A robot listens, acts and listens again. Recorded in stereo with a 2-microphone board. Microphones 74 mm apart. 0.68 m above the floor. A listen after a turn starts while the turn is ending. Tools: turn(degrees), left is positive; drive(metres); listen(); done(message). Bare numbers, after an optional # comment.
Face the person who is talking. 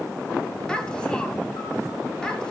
turn(30)
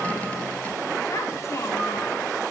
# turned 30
# So it is at 140° left.
turn(140)
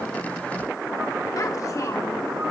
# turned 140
listen()
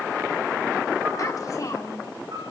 # The child speaking is now 50° left.
turn(50)
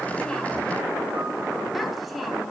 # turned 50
listen()
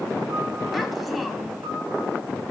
listen()
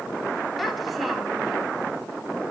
done("I heard a child speaking from this way, but can't make it out now.")